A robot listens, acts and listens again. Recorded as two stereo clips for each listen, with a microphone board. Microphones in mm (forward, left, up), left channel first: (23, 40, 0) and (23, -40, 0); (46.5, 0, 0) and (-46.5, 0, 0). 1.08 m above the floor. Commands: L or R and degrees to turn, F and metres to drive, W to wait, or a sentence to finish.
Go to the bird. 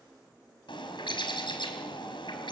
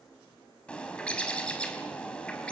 L80
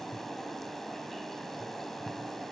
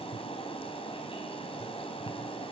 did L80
F1.0
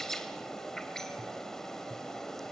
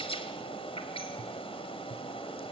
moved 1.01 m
F1.0
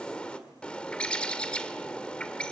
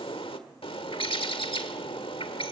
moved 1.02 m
L15
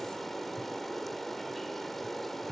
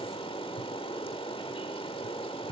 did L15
F1.0
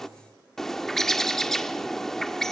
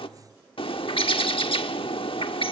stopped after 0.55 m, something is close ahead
Arrived at the bird, straight ahead.